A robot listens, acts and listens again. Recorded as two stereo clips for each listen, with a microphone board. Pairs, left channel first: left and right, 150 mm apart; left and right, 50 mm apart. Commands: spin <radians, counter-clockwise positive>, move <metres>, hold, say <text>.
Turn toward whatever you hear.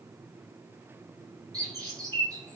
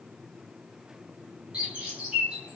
spin -0.44
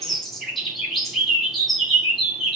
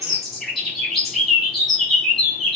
say Facing the bird, 1 to 2 m away.